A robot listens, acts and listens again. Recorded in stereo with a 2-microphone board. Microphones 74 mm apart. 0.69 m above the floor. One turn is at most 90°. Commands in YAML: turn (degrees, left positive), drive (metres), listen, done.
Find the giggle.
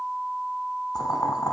listen: true
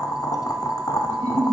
turn: -45
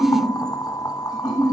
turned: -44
done: "Found it: a giggle, straight ahead."